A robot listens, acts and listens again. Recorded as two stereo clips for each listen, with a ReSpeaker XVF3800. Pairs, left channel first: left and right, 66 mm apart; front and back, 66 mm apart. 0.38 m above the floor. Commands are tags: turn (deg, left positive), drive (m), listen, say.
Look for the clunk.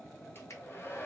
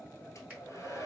<listen/>
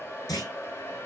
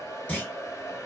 <turn deg="70"/>
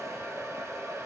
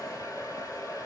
<say>I heard a clunk from this way, but can't make it out now.</say>